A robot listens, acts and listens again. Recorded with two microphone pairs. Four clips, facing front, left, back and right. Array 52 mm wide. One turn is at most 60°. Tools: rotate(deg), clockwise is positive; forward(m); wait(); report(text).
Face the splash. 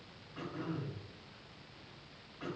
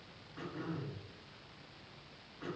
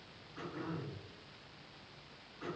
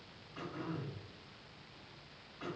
wait()
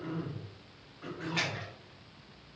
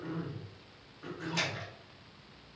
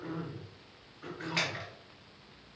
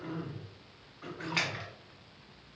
rotate(60)
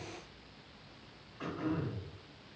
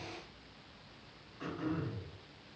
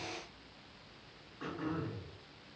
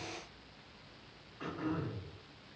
rotate(45)
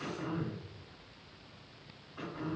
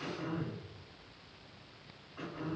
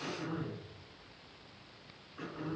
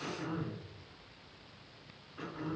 report("Facing where the splash came from. I can't hear it now.")